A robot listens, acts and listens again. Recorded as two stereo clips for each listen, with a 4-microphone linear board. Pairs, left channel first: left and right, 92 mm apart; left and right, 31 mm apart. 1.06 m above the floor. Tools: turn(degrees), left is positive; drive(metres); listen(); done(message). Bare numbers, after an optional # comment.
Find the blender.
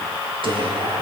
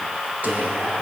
listen()
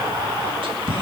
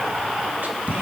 listen()
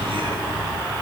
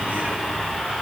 done("I can't make out a blender, only whispering.")